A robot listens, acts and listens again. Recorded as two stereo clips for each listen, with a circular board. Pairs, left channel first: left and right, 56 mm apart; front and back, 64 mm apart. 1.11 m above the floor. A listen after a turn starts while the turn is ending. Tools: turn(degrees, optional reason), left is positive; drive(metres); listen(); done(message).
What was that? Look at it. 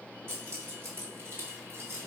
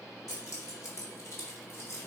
turn(degrees=-45, reason="The keys jangling: 45° right.")
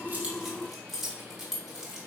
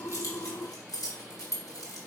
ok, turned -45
turn(degrees=-10, reason="The keys jangling is now 10° right.")
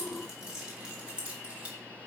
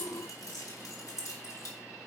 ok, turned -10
turn(degrees=-25, reason="The keys jangling is now 25° right.")
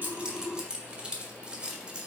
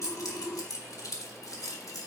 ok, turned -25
turn(degrees=-15, reason="The keys jangling is now 15° right.")
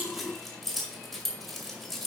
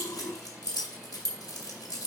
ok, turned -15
done("Found it: keys jangling, straight ahead, 2 to 4 m away.")